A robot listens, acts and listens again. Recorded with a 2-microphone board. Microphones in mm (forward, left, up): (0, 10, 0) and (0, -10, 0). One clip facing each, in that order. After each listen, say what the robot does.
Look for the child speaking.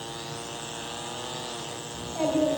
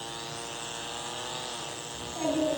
Turn 50° left.
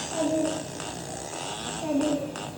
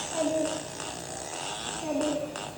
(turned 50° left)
Turn 20° left.
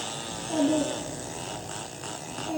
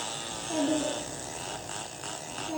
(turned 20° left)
Turn 15° left.
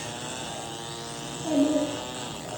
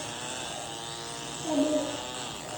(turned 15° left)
Facing the child speaking.